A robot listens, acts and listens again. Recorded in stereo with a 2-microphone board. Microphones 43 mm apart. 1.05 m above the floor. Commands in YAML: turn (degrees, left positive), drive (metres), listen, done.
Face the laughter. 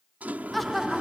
turn: 30
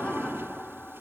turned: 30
turn: 150
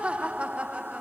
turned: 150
turn: -35
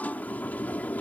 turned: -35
listen: true
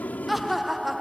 done: "Found it: laughter, straight ahead."